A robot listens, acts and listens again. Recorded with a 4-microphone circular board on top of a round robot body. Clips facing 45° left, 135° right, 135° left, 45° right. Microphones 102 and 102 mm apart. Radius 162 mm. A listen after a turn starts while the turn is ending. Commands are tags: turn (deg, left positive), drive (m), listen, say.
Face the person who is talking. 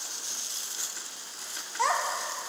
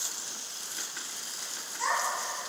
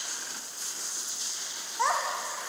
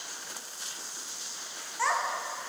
<turn deg="70"/>
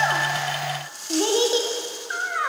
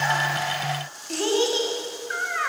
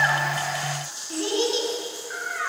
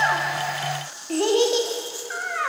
<turn deg="-25"/>
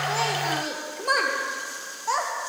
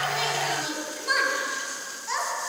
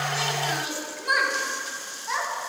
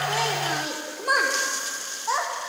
<say>Facing the child speaking.</say>